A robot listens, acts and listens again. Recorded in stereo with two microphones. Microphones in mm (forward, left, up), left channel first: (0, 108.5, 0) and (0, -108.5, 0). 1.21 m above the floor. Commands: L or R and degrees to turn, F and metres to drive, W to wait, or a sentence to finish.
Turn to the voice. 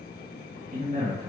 R45
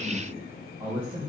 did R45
R25
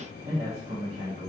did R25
R35
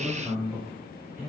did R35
Found it: a man speaking, straight ahead.